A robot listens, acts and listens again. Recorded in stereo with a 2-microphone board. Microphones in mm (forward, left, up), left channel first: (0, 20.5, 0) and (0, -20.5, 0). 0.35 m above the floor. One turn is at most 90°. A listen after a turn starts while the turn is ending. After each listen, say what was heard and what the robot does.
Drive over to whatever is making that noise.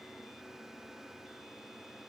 Keep listening.
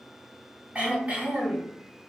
The throat clearing: about 35° right or 145° right. Turn 35° right.
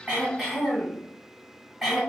Drive 1.0 m forward.
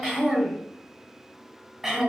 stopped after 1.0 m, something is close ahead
The throat clearing is now 15° right. Turn 15° right.
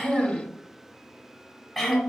Arrived at the throat clearing, straight ahead.